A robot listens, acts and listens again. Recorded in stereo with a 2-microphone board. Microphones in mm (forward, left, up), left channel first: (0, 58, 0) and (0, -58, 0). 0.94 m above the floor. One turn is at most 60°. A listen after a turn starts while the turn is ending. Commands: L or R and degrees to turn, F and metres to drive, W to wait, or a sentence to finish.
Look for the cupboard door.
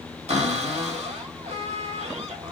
R60
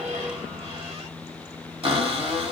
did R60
R55
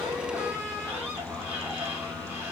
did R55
R15
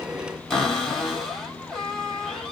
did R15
Found it: a cupboard door, straight ahead, 1 to 2 m away.